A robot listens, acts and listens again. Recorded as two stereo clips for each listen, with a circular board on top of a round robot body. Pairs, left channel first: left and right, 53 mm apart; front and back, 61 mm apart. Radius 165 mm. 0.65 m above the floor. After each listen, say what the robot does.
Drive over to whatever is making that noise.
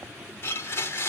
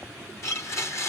Turn 45° left.
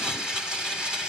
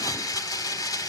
Turn 15° right.
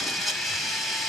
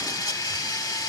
Drive 1.0 m forward.
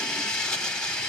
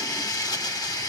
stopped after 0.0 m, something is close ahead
Turn 15° left.
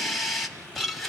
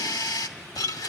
Blocked. The blender is further on, straight ahead.